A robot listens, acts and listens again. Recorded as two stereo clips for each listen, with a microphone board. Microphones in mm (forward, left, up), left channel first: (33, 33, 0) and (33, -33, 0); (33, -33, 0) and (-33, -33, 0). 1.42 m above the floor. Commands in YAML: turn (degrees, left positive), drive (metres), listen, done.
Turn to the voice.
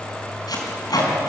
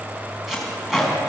listen: true
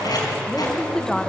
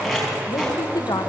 turn: 10
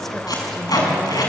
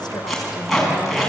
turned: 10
listen: true
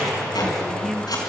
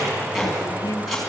done: "Facing the woman speaking."